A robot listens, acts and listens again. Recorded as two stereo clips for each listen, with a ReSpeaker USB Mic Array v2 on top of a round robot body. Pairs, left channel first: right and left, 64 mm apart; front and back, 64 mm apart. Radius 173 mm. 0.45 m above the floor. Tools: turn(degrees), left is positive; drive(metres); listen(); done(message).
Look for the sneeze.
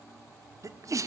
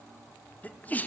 turn(degrees=60)
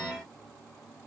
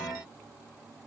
done("I heard a sneeze from this way, but can't make it out now.")